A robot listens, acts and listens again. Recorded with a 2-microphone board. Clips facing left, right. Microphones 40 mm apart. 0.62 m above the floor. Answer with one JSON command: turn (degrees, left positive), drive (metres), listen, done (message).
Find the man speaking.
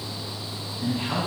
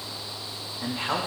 {"turn": -65}
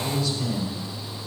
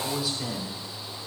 {"turn": -10}
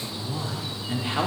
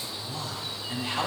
{"turn": 25}
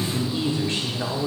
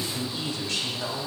{"turn": 35}
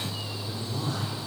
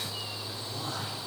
{"done": "Facing the man speaking, 1 to 2 m away."}